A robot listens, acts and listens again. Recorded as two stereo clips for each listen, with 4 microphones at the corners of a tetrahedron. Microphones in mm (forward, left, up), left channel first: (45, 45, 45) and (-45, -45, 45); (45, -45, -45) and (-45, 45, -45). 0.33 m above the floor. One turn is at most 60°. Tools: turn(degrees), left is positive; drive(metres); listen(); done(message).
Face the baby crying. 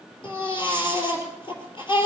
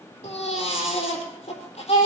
done("Facing the baby crying.")